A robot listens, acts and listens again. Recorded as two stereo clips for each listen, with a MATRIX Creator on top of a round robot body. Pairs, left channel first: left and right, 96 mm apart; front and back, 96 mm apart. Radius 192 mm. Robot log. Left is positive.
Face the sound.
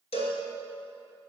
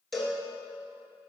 note: The cowbell: 90° left.
cmd yaw +90
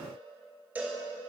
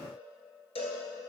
note: The cowbell is now 15° right.
cmd yaw -15
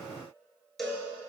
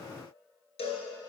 end: Found it: a cowbell, straight ahead.